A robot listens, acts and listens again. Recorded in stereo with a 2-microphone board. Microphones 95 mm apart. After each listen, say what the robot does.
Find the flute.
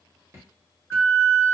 Turn 30° left.
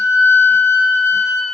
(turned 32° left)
Turn 15° right.
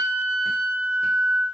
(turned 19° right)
Facing the flute, 1 to 2 m away.